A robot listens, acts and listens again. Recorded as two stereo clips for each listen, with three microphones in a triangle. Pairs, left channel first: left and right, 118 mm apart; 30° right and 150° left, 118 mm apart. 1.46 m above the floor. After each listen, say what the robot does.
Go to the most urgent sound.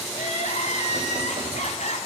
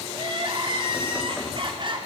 Turn 105° left.
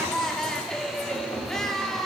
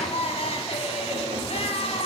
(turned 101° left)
Drive 1.0 m forward.
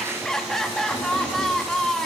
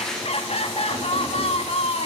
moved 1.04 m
Drive 1.0 m forward.
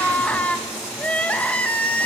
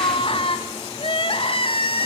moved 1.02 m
Turn 10° left.
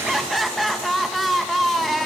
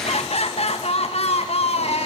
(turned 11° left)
Drive 1.0 m forward.
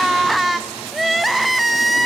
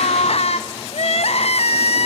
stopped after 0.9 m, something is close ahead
Arrived at the crying, straight ahead.